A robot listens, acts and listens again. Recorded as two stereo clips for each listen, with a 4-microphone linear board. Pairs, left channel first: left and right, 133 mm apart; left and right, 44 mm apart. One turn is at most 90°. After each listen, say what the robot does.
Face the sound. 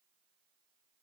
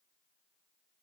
Keep listening.
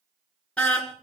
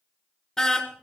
Turn 30° left.
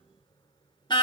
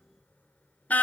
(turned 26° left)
Turn 90° left.
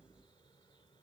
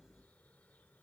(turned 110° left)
Turn 35° left.
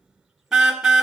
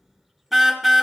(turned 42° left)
Found it: a car horn, straight ahead.